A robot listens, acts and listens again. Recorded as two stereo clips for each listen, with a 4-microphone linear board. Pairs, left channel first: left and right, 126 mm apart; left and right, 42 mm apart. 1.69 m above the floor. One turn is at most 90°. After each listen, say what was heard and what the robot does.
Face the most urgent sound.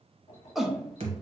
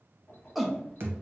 Turn 30° right.
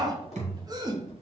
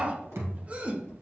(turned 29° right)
So it is at 145° right. Turn 90° right.
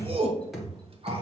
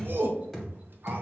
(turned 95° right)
The shout is now 50° right. Turn 50° right.
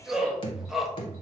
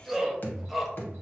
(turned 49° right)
Facing the shout.